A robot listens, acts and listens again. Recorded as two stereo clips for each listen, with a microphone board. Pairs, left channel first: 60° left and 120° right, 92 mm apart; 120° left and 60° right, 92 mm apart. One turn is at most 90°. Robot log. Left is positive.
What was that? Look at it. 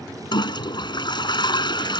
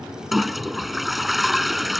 note: The toilet flushing: 30° left.
cmd yaw +30
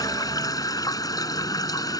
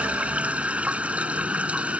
note: The toilet flushing is now 15° left.
cmd yaw +15
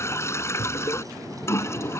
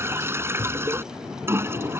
end: Found it: a toilet flushing, straight ahead.